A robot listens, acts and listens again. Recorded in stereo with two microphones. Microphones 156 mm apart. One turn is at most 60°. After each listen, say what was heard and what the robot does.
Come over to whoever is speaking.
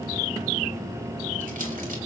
Keep listening.
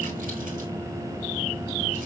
Keep listening.
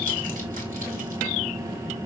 I can't make out anyone speaking.